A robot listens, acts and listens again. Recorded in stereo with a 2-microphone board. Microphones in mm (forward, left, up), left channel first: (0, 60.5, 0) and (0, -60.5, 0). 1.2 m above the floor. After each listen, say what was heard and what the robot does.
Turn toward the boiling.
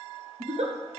Keep listening.
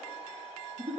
Keep listening.
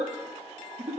I can't make out boiling, only a giggle.